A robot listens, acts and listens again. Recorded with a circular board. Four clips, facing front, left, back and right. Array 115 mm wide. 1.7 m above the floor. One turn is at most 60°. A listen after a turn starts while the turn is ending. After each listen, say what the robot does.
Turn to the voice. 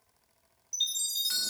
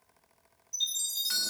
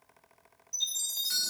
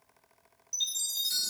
Keep listening.
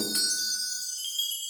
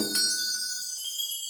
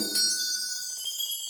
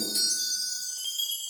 Keep listening.
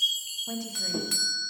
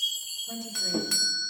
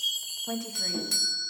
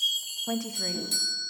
Turn 60° right.
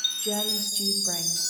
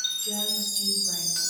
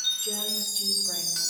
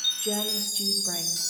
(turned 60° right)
Turn 40° right.
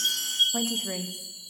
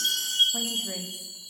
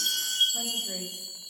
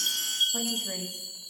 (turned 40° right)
Keep listening.
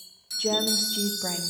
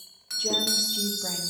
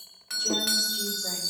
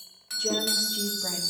Facing where the woman speaking came from. I can't hear it now.